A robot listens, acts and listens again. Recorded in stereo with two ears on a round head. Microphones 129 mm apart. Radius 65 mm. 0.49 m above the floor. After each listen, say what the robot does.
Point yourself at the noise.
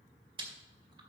Turn 35° right.
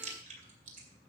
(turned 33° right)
Turn 105° right.
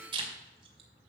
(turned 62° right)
Turn 40° right.
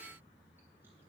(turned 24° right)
Turn 20° right.
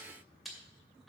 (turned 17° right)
Facing the chewing.